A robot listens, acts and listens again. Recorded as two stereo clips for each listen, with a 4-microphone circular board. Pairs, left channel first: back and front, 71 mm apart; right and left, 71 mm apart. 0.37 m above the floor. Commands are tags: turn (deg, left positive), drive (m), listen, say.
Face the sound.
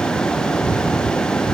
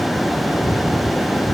<listen/>
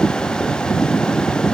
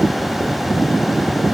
<listen/>
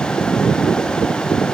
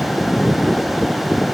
<say>I can't make out anything.</say>